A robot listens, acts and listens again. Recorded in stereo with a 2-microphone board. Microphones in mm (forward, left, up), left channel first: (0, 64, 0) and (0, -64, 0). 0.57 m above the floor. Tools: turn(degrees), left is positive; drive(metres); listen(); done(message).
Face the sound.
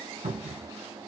turn(degrees=-65)
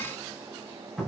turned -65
done("Facing the cupboard door.")